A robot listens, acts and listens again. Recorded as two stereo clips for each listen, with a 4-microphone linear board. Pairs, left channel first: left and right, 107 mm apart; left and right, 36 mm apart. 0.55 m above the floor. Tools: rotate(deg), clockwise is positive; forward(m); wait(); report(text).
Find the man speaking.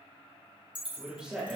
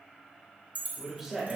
rotate(15)
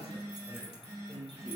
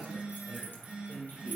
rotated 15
rotate(20)
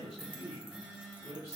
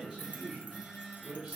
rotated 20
rotate(20)
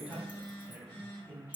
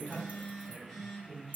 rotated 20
rotate(30)
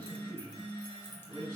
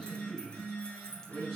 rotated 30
rotate(-20)
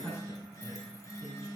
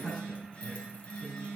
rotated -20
report("Facing the man speaking, over 4 m away.")